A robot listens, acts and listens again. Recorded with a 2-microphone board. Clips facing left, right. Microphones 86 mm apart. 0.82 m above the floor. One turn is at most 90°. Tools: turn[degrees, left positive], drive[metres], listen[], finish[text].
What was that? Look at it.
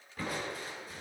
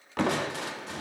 Action: turn[-90]
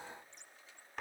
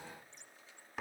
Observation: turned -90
Action: finish[Facing the crushing, under 1 m away.]